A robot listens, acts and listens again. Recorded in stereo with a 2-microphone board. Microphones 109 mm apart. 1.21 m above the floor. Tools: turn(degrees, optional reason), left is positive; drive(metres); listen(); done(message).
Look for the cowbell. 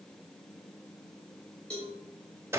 turn(degrees=30)
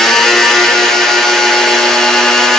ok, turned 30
listen()
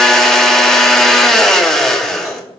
listen()
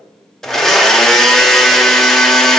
done("I heard a cowbell, but can't make it out now. It was about 20° right or 140° left.")